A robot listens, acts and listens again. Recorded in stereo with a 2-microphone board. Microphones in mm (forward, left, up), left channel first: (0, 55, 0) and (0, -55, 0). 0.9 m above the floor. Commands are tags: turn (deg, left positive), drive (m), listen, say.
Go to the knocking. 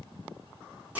<listen/>
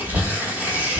<turn deg="-90"/>
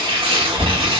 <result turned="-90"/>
<drive m="1.0"/>
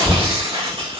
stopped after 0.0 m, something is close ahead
<turn deg="-15"/>
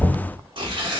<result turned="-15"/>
<say>Blocked. The knocking is further on, straight ahead.</say>